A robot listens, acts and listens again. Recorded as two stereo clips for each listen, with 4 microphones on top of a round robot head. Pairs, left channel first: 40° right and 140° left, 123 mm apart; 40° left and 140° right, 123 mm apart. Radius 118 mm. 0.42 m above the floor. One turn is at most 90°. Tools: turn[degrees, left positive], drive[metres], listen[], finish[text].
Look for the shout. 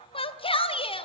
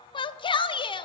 Action: finish[Facing the shout.]